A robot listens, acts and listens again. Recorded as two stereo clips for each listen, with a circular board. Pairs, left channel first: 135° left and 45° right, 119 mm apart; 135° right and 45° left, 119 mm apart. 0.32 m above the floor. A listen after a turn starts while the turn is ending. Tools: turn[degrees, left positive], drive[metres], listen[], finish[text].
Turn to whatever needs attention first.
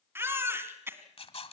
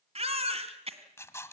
Thought: The baby crying: 25° left.
Action: turn[25]
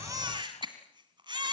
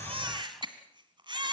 Action: finish[Found it: a baby crying, straight ahead.]